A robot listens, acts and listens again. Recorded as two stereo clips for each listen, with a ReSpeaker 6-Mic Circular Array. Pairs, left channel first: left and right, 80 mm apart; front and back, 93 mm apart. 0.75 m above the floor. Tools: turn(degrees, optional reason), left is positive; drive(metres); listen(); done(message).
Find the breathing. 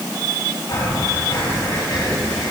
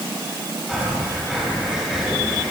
turn(degrees=90, reason="The breathing: 90° left.")
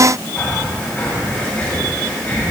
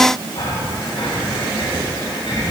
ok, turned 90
turn(degrees=20, reason="The breathing is now 20° left.")
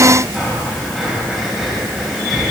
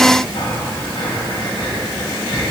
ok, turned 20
done("Found it: breathing, straight ahead, over 4 m away.")